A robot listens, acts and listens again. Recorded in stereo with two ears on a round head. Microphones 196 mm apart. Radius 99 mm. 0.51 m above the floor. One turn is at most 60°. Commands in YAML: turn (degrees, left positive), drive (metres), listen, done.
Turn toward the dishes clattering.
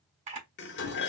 turn: 50
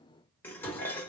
turn: 10
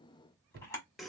done: "Found it: dishes clattering, straight ahead."